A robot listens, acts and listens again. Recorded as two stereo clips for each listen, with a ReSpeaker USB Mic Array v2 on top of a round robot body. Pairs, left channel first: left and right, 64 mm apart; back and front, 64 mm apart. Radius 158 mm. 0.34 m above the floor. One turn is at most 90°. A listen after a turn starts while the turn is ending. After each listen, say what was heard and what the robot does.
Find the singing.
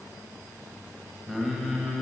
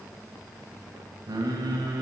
Facing the singing, 2 to 4 m away.